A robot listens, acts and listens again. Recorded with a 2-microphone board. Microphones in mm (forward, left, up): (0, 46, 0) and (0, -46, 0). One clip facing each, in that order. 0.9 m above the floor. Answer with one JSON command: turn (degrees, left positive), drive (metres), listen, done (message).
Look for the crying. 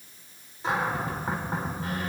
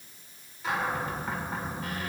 {"listen": true}
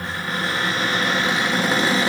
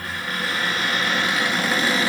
{"listen": true}
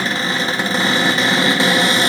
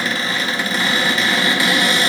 {"done": "I can't make out crying, only a cupboard door."}